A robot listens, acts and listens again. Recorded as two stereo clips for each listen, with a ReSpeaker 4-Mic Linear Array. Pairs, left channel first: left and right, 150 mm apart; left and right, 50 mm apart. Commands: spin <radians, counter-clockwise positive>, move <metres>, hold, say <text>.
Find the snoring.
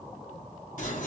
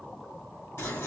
hold
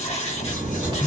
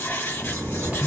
spin -0.52
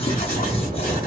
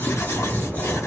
spin -2.01
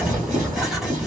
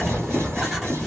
spin -0.17
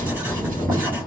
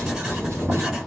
say Found it: snoring, straight ahead.